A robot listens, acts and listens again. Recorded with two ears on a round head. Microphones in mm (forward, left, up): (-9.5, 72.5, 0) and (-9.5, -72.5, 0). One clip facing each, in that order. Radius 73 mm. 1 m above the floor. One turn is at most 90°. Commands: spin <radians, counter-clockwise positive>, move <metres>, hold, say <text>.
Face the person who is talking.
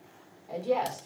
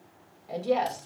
spin -0.52
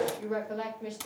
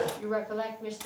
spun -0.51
spin 0.26
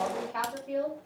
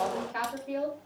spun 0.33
say Found it: a woman speaking, straight ahead, 2 to 4 m away.